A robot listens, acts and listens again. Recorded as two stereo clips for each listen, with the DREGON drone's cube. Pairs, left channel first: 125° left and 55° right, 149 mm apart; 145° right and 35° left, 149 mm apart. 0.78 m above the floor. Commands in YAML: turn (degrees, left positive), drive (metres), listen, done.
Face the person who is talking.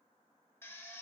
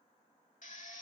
listen: true
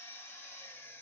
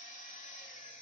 listen: true
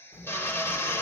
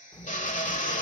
turn: 155
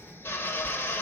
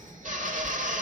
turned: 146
turn: 10
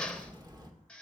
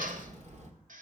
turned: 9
done: "Facing the child speaking, 1 to 2 m away."